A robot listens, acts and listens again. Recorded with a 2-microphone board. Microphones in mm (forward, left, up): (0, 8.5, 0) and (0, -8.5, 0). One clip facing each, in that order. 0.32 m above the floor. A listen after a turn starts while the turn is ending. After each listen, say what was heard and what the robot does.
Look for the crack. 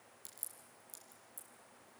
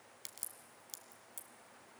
The crack: about 60° right or 120° right. Turn 60° right.
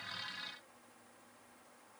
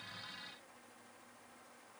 Keep listening.
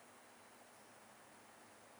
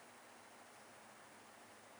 I heard a crack, but can't make it out now. It was about straight ahead or 60° right.